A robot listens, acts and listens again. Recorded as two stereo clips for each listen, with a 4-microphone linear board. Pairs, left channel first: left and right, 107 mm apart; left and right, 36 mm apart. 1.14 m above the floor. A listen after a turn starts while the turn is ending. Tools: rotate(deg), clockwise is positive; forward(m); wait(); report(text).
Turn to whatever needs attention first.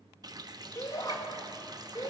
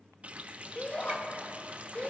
rotate(-35)
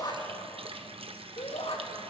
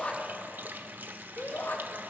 rotate(-110)
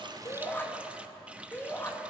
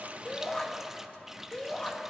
rotate(-20)
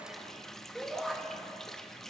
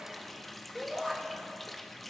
report("Facing the shout.")